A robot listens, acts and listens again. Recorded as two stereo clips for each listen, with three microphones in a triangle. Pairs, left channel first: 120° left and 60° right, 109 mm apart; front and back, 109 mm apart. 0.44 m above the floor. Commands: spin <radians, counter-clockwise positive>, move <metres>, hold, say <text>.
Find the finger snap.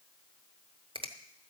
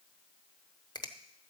spin -0.70
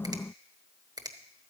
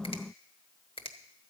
spin -0.26
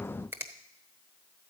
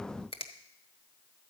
say Found it: a finger snap, straight ahead.